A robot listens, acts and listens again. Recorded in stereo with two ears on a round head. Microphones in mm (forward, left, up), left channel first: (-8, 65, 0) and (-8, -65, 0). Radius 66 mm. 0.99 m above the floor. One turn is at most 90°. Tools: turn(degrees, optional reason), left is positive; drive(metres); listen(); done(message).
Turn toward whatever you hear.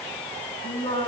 turn(degrees=30, reason="The singing: about 30° left or 150° left.")
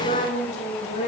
turn(degrees=90, reason="So it is at 135° left.")
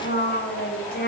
turn(degrees=70, reason="The singing is now 70° left.")
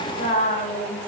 turn(degrees=50, reason="The singing is now 50° left.")
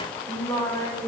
turn(degrees=25, reason="The singing is now 25° left.")
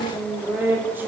turn(degrees=-15, reason="The singing is now 15° right.")
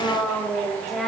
done("Facing the singing, 2 to 4 m away.")